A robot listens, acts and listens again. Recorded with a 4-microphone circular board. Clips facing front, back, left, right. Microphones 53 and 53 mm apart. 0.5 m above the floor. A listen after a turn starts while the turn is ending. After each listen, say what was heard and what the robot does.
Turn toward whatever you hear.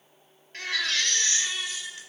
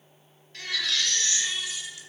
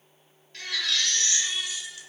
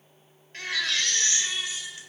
The baby crying: 40° right. Turn 40° right.
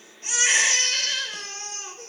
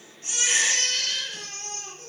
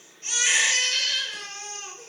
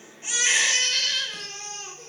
Found it: a baby crying, straight ahead, 1 to 2 m away.